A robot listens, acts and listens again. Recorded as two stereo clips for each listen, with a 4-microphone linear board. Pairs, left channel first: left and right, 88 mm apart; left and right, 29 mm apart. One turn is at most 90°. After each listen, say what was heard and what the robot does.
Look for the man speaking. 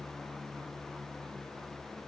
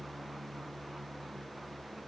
Keep listening.
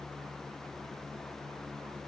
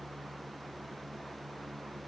Keep listening.
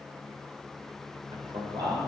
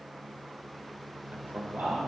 The man speaking: about 65° right or 115° right. Turn 65° right.
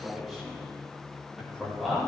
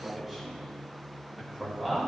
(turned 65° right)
Facing the man speaking, over 4 m away.